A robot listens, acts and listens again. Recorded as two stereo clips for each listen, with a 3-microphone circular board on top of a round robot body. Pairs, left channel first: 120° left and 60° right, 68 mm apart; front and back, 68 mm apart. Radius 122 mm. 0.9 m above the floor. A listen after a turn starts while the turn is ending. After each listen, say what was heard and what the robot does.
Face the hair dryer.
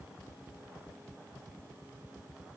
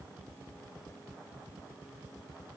Keep listening.
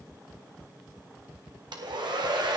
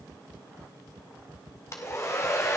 The hair dryer: 50° right. Turn 50° right.
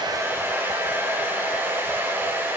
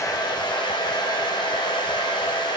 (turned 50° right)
Facing the hair dryer.